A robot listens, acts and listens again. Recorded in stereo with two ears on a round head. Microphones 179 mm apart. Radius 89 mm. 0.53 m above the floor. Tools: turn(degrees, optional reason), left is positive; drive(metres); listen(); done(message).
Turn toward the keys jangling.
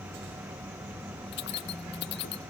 turn(degrees=55, reason="The keys jangling: about 55° left or 125° left.")
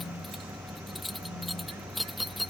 done("Found it: keys jangling, straight ahead.")